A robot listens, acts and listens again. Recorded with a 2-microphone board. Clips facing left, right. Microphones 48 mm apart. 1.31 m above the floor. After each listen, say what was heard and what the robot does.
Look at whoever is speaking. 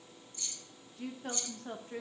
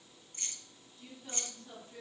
The woman speaking: about 55° left or 125° left. Turn 55° left.
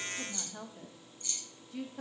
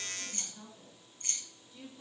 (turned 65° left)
So it is at 85° left. Turn 85° left.
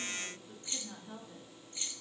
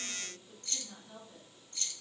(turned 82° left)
The woman speaking is now 30° left. Turn 30° left.
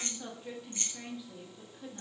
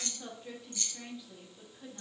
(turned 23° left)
The woman speaking is now 10° left. Turn 10° left.
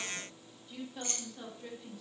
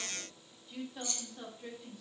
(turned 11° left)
Facing the woman speaking.